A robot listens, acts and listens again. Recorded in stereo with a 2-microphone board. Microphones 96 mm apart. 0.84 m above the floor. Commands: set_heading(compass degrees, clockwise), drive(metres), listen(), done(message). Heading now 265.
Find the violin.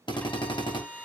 set_heading(235)
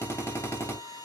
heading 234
set_heading(99)
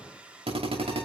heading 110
set_heading(100)
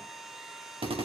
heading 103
done("Found it: a violin, straight ahead.")